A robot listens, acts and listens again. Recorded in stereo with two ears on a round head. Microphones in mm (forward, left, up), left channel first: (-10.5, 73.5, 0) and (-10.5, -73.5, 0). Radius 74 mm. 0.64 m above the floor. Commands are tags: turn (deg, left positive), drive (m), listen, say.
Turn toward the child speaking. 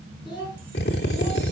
<turn deg="30"/>
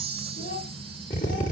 <turn deg="125"/>
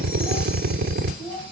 <turn deg="15"/>
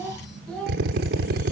<say>Facing the child speaking, over 4 m away.</say>